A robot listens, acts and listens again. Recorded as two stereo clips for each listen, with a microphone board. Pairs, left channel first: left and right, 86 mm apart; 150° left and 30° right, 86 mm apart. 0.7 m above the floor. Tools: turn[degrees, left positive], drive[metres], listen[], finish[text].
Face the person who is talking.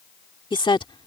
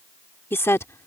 Thought: The woman speaking: 95° left.
Action: turn[95]
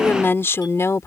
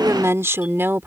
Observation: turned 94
Thought: The woman speaking is now 35° left.
Action: turn[35]
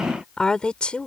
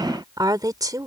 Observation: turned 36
Thought: The woman speaking is now 15° left.
Action: turn[15]
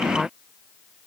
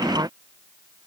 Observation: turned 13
Action: finish[Facing the woman speaking.]